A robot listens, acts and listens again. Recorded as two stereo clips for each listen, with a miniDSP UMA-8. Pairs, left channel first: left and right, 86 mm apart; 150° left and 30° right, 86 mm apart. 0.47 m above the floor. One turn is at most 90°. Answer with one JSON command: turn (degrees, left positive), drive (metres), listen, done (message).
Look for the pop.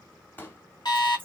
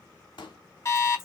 {"turn": 90}
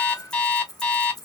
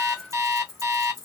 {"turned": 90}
{"turn": 65}
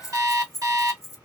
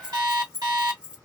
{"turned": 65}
{"done": "I heard a pop from this way, but can't make it out now."}